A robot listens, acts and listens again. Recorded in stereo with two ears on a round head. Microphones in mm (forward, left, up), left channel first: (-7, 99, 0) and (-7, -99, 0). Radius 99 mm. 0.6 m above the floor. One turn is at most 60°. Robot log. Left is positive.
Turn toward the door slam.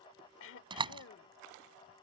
note: The door slam: about 25° right or 155° right.
cmd yaw -25
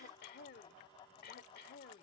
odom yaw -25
cmd idle
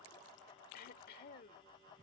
end: I heard a door slam, but can't make it out now. It was about straight ahead or 130° right.